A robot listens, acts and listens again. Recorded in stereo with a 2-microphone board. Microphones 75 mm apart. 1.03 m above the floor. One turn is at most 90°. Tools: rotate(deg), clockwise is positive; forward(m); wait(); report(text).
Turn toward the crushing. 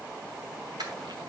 rotate(90)
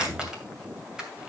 rotate(10)
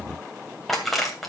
report("Facing the crushing.")